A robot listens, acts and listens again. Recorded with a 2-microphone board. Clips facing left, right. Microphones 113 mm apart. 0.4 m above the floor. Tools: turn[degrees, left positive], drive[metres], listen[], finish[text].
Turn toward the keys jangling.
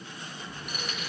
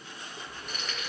Action: turn[30]
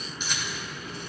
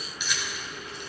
Thought: So it is at 140° left.
Action: turn[140]
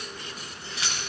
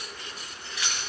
Thought: The keys jangling is now 30° left.
Action: turn[30]
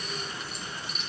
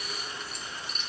Action: finish[Facing the keys jangling.]